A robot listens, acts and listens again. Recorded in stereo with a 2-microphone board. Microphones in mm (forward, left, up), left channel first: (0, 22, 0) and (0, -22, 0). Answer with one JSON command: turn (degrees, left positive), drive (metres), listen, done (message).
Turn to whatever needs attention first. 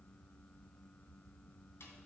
{"listen": true}
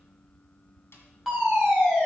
{"turn": -30}
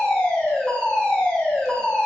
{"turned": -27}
{"turn": 20}
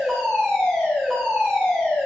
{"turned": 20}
{"done": "Found it: a fire alarm, straight ahead, over 4 m away."}